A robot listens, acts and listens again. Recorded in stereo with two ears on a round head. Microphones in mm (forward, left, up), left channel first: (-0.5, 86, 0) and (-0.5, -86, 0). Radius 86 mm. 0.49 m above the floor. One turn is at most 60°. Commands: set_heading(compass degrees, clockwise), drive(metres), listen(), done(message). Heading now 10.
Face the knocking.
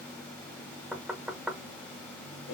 set_heading(40)
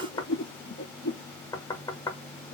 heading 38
set_heading(18)
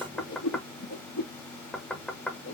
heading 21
done("Facing the knocking, 1 to 2 m away.")